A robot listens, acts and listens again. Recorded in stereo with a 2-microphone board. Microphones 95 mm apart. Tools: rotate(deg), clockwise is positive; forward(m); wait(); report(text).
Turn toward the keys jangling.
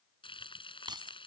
rotate(50)
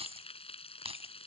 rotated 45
rotate(80)
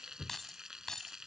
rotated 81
report("Found it: keys jangling, straight ahead.")